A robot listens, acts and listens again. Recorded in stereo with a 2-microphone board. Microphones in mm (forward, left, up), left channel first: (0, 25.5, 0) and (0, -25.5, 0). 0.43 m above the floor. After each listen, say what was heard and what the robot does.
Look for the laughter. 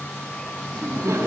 The laughter: about 70° right or 110° right. Turn 70° right.
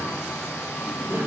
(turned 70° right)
So it is at 40° right. Turn 40° right.
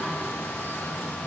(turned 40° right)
Keep listening.
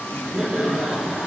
The laughter is now 10° right. Turn 10° right.
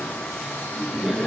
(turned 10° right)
Facing the laughter.